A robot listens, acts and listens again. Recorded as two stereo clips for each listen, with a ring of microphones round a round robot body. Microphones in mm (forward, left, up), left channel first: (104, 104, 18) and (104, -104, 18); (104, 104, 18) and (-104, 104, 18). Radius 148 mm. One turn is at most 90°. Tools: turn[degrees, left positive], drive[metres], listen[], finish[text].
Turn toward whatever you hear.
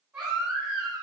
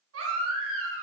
Thought: The baby crying: 175° right.
Action: turn[-90]
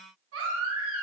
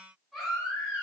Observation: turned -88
Thought: The baby crying is now 90° right.
Action: turn[-90]
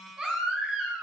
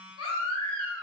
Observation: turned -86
Action: finish[Found it: a baby crying, straight ahead.]